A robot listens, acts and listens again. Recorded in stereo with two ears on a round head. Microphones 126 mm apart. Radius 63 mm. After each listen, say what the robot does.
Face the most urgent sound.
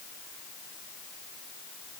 Keep listening.
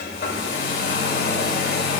Keep listening.
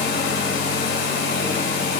I can't make out anything urgent, only a hair dryer.